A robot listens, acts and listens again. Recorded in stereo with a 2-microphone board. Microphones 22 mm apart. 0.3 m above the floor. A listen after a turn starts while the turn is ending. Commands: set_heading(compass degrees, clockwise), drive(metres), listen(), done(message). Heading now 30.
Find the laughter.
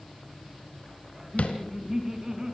set_heading(60)
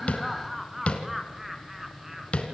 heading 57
set_heading(87)
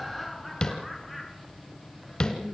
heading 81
done("Found it: laughter, straight ahead, 2 to 4 m away.")